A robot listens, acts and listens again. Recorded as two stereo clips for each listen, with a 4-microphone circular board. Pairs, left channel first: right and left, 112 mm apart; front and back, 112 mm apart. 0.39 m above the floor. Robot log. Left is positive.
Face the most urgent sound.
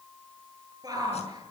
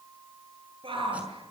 note: The shout: 145° left.
cmd yaw +145
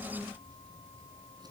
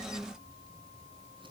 cmd idle
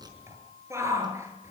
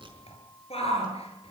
note: The shout is now 25° left.
cmd yaw +25
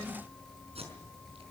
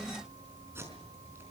cmd idle
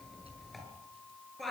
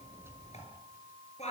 end: Facing the shout.